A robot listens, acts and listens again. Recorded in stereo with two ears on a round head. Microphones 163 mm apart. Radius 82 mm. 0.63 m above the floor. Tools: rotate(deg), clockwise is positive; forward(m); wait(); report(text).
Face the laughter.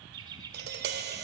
rotate(20)
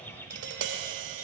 wait()
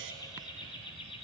rotate(-30)
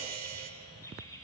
rotate(-20)
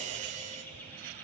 wait()
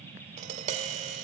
wait()
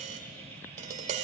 report("Facing where the laughter came from. I can't hear it now.")